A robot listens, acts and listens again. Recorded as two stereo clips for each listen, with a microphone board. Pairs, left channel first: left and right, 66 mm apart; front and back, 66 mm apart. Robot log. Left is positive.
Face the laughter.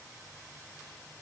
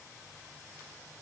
cmd idle
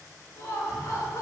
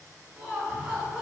note: The laughter: 115° left.
cmd yaw +115
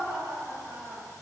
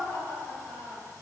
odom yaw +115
note: The laughter is now 25° right.
cmd yaw -25
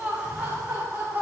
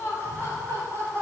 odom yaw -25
note: The laughter is now 45° right.
cmd yaw -45
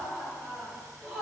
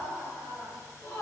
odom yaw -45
note: The laughter is now 20° right.
cmd yaw -20
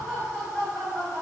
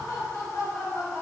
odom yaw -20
end: Facing the laughter.